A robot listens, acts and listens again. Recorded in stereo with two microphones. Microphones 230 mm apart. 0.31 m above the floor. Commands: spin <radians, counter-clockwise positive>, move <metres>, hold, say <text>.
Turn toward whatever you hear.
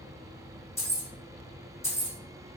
spin 0.52
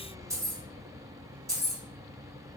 spin -0.26
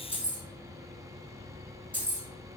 say Found it: keys jangling, straight ahead, 1 to 2 m away.